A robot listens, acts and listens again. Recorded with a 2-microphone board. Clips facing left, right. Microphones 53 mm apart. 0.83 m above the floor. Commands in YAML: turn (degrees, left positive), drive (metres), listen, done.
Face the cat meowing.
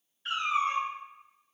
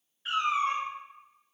turn: -30
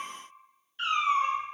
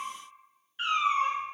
turn: -20
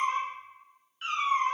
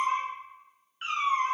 turn: -30
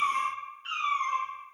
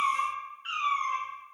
turn: -20
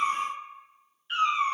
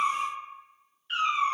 done: "Facing the cat meowing."